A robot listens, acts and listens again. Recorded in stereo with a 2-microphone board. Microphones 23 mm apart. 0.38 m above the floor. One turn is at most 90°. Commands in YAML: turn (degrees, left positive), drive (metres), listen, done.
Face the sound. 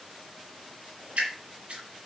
turn: -90
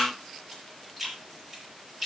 done: "Found it: dripping, straight ahead."